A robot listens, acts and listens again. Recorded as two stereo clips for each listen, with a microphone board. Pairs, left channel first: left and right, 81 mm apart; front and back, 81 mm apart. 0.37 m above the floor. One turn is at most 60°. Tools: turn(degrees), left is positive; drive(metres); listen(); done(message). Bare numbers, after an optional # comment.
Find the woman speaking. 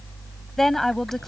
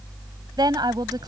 # The woman speaking: 175° left.
turn(60)
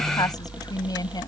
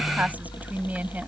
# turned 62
# The woman speaking is now 115° left.
turn(60)
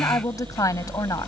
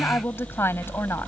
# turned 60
# The woman speaking is now 55° left.
turn(55)
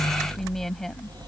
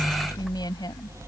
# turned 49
done("Found it: a woman speaking, straight ahead.")